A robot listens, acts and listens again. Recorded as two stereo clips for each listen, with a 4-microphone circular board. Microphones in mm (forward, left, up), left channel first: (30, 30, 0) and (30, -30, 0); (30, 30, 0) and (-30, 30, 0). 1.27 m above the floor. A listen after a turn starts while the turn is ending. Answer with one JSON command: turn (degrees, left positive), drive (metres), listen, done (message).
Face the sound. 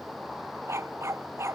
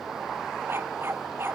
{"turn": -130}
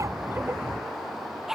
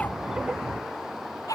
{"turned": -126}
{"done": "Facing the dog barking."}